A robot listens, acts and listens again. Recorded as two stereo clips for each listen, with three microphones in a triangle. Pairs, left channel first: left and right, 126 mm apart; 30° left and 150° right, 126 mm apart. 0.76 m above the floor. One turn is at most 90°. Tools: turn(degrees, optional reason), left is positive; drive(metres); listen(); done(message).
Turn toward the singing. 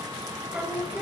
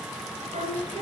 turn(degrees=-90, reason="The singing: 170° right.")
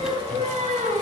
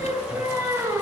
turn(degrees=-80, reason="The singing is now 80° right.")
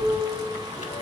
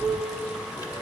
turn(degrees=10, reason="The singing is now 10° left.")
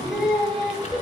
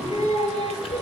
done("Found it: singing, straight ahead.")